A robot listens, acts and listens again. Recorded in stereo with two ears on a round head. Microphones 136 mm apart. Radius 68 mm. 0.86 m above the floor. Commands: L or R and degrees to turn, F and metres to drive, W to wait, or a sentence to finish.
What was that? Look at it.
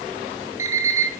R20
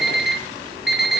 Facing the alarm clock, 2 to 4 m away.